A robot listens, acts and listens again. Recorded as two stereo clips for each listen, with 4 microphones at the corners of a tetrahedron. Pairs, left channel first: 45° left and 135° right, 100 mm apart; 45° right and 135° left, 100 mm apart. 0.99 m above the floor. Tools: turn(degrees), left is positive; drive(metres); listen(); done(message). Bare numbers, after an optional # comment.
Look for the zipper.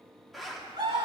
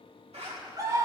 # The zipper: 135° left.
turn(135)
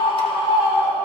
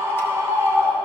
listen()
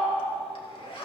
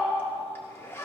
# The zipper is now 20° left.
turn(20)
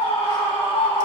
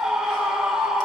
listen()
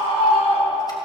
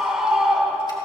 listen()
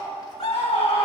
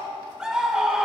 done("Facing where the zipper came from. I can't hear it now.")